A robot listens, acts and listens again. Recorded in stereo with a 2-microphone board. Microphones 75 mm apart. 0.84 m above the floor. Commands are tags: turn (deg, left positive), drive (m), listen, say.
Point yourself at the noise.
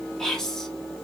<turn deg="30"/>
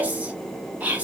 <turn deg="-25"/>
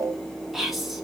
<say>Facing the whispering, under 1 m away.</say>